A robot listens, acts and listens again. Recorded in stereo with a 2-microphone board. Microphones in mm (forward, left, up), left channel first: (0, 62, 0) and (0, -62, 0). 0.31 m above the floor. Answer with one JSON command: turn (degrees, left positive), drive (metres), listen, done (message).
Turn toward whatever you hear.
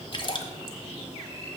{"turn": 45}
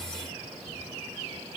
{"listen": true}
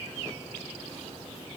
{"done": "I heard a splash, but can't make it out now. It was about straight ahead or 90° left."}